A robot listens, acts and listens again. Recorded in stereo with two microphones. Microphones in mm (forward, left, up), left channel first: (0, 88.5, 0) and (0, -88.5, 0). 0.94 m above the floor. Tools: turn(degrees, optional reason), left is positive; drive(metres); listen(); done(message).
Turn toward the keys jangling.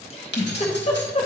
turn(degrees=90)
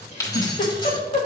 turn(degrees=25, reason="So it is at 25° left.")
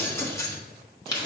turn(degrees=25, reason="The keys jangling is now 25° left.")
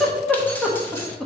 listen()
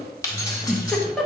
turn(degrees=20, reason="The keys jangling is now 20° left.")
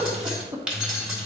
done("Found it: keys jangling, straight ahead.")